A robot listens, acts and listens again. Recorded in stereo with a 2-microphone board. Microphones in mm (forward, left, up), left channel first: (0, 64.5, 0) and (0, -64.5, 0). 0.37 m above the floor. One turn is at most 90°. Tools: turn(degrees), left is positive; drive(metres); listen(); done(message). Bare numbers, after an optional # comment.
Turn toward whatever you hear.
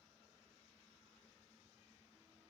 listen()
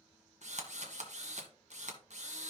# The drill: about 65° right or 115° right.
turn(-65)
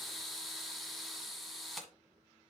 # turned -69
done("Facing the drill, 1 to 2 m away.")